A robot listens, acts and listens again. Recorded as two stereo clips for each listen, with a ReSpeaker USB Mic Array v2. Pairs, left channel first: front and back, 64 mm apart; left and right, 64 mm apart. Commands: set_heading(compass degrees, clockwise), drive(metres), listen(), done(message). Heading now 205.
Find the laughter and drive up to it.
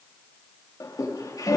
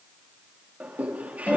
set_heading(230)
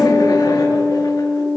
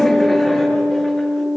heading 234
listen()
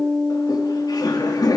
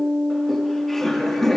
drive(1.0)
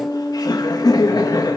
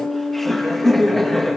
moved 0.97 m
drive(1.0)
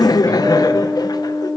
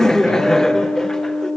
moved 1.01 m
set_heading(224)
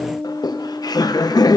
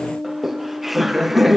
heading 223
drive(1.0)
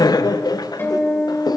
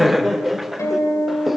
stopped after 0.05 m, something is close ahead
done("Arrived at the laughter, straight ahead.")